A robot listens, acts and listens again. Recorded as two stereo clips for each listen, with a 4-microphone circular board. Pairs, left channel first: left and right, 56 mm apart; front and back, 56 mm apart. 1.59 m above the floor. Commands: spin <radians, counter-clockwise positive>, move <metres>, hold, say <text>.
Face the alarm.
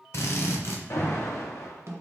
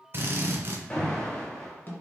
spin 1.22
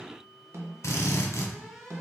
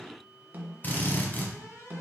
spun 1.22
hold
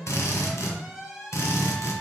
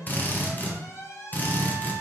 say Found it: an alarm, straight ahead.